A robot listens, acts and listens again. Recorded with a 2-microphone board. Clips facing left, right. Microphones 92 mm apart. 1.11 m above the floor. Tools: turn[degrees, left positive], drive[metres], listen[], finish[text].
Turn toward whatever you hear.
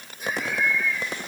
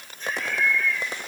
Action: turn[30]
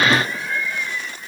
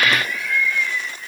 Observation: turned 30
Thought: So it is at 155° left.
Action: turn[155]
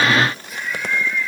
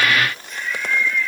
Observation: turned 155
Thought: The laughter is now 10° left.
Action: turn[10]
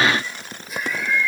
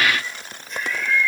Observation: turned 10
Thought: The laughter is now 10° left.
Action: turn[10]
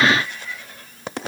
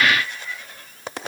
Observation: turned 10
Action: listen[]
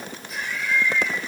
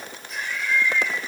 Action: finish[Facing the laughter.]